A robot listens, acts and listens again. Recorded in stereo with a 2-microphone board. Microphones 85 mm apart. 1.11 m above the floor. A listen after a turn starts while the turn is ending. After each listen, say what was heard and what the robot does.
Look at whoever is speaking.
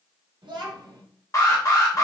Turn 90° right.
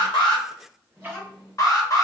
So it is at 10° left. Turn 10° left.
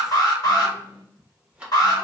Facing the child speaking.